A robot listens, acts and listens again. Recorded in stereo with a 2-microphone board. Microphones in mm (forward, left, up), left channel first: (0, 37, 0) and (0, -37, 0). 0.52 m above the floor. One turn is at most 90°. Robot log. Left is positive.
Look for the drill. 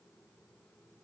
cmd idle
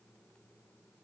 cmd idle
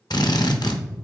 note: The drill: about 65° left or 115° left.
cmd yaw +65
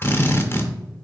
note: So it is at 35° left.
cmd yaw +35
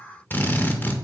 note: The drill is now 25° left.
cmd yaw +25
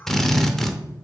end: Facing the drill.